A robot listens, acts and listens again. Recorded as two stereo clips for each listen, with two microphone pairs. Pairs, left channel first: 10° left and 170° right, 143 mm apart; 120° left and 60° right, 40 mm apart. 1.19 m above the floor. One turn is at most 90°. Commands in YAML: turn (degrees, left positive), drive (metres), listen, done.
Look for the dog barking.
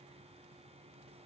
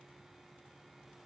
listen: true
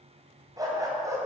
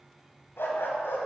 turn: 90
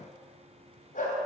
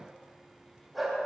turn: 25
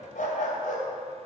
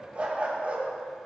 turn: -10
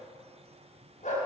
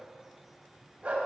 turn: -10
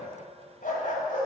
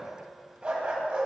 done: "Found it: a dog barking, straight ahead."